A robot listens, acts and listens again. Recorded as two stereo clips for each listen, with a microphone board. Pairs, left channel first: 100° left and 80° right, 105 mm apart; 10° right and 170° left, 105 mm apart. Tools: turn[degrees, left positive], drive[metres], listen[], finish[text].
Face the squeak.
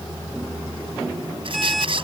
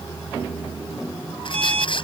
Thought: The squeak: 45° right.
Action: turn[-45]
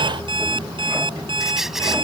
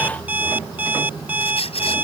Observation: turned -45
Thought: The squeak is now 10° left.
Action: turn[10]
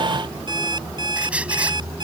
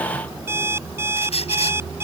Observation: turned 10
Action: finish[Facing the squeak.]